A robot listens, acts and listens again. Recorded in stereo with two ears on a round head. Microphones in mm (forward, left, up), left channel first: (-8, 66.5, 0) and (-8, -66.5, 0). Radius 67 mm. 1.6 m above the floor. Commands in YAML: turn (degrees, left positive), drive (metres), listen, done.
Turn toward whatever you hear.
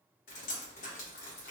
turn: 60
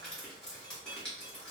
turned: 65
done: "Facing the dripping, 1 to 2 m away."